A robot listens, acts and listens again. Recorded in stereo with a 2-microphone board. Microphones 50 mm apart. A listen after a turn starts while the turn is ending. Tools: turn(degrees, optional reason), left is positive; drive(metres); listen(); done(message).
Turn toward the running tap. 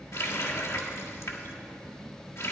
turn(degrees=90)
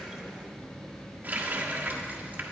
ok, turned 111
turn(degrees=-30, reason="So it is at 30° right.")
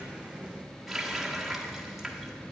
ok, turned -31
done("Found it: a running tap, straight ahead, 1 to 2 m away.")